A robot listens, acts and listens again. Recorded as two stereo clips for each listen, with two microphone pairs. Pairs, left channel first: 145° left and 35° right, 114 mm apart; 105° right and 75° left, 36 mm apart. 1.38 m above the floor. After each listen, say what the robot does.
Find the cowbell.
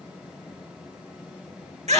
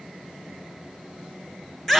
Keep listening.
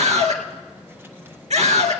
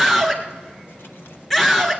Keep listening.
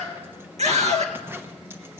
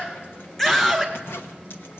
I can't make out a cowbell to turn to.